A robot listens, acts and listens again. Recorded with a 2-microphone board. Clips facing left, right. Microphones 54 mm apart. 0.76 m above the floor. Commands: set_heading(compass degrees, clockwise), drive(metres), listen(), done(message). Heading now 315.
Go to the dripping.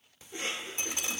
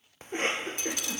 set_heading(290)
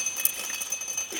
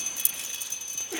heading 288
set_heading(158)
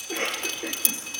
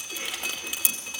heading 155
drive(1.0)
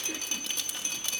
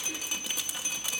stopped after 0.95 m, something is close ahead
set_heading(165)
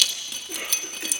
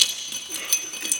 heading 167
done("Arrived at the dripping, straight ahead.")